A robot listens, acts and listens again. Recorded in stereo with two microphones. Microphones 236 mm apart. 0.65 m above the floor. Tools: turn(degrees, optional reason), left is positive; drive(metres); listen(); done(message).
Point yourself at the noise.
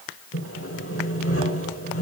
turn(degrees=70, reason="The sawing: about 70° left or 110° left.")
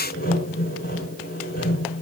turn(degrees=40, reason="So it is at 40° left.")
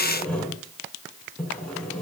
done("Facing the sawing.")